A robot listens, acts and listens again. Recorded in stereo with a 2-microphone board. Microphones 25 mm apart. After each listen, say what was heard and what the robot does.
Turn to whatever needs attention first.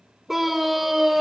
Turn 30° right.
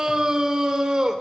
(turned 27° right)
So it is at 140° right. Turn 140° right.
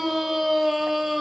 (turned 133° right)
The scream is now 10° right. Turn 10° right.
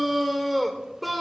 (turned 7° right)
Found it: a scream, straight ahead.